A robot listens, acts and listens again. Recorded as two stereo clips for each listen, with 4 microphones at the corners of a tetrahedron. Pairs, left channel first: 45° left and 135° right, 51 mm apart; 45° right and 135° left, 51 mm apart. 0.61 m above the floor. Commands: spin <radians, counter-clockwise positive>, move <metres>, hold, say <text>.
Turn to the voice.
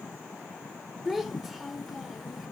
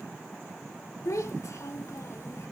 spin -0.87
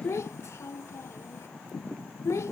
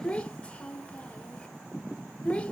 spin 0.35
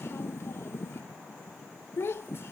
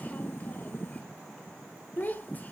spin 0.17
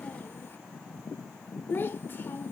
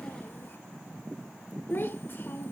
say Found it: a child speaking, straight ahead, 1 to 2 m away.